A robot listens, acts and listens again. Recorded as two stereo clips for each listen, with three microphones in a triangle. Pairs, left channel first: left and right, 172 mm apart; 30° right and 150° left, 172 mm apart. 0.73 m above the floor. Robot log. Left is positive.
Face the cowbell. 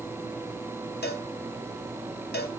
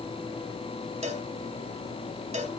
note: The cowbell: 100° left.
cmd yaw +100
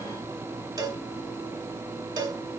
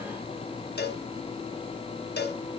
note: The cowbell is now 25° right.
cmd yaw -25
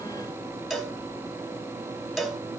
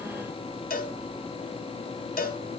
end: Facing the cowbell, under 1 m away.